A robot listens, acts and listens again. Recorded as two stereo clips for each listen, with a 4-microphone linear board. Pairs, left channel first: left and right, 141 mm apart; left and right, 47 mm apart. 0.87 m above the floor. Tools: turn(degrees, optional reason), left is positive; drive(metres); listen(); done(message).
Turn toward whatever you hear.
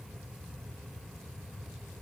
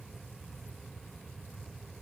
listen()
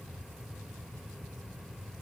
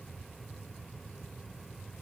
listen()
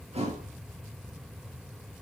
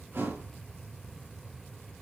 turn(degrees=-50, reason="The thud: about 50° right or 130° right.")
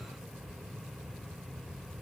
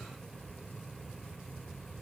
listen()
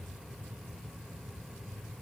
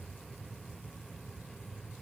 done("I heard a thud, but can't make it out now. It was about straight ahead or 80° right.")